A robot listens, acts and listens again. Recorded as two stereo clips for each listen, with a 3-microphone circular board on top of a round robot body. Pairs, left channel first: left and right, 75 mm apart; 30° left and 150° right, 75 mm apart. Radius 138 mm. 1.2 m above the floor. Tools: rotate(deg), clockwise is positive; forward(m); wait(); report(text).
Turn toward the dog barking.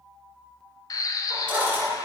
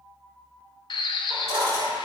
rotate(170)
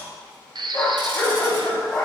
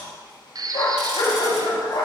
rotate(-10)
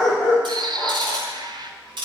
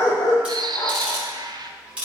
report("Facing the dog barking.")